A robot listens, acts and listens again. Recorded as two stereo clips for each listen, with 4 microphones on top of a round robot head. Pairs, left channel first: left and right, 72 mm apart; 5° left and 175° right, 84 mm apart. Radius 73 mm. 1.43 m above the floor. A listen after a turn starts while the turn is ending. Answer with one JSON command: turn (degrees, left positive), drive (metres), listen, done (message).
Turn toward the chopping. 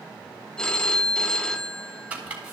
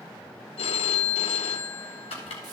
{"turn": -20}
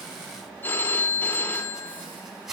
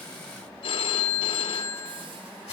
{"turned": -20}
{"done": "Found it: chopping, straight ahead, 2 to 4 m away."}